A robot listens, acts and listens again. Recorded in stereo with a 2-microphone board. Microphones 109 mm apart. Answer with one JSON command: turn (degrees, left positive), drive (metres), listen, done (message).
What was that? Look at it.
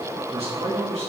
{"turn": -65}
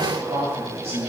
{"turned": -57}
{"turn": -65}
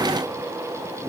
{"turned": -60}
{"listen": true}
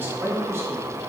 {"turn": -25}
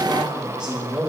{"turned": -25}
{"turn": -15}
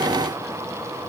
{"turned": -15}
{"listen": true}
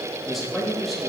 {"done": "Found it: a man speaking, straight ahead, 2 to 4 m away."}